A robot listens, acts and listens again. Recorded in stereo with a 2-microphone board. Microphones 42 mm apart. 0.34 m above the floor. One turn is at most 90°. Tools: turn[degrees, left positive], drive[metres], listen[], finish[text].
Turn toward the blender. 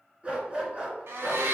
Thought: The blender: about 70° right or 110° right.
Action: turn[-70]
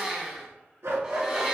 Thought: So it is at 20° right.
Action: turn[-20]
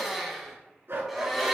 Action: finish[Found it: a blender, straight ahead.]